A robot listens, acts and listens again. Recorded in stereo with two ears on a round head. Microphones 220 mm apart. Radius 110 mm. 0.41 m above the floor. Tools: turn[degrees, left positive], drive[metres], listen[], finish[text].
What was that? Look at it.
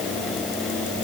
Action: listen[]
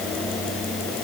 Action: listen[]
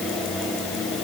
Action: finish[I can't make out anything.]